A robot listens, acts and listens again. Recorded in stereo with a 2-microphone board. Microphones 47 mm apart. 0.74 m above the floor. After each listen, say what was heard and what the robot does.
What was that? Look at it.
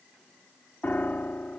The piano: about 40° left or 140° left. Turn 40° left.
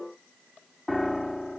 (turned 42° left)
So it is at 10° left. Turn 10° left.
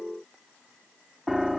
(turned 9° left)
Facing the piano.